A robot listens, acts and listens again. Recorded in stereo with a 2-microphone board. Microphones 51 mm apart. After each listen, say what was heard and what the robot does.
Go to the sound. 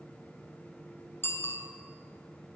The bicycle bell: about 50° left or 130° left. Turn 50° left.
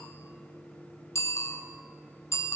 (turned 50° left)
So it is at 75° left. Turn 75° left.
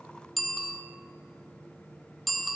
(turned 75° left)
Drive 1.0 m forward.
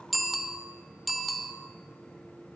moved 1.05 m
Drive 1.0 m forward.
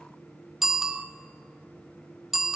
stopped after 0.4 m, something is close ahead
I am next to the bicycle bell.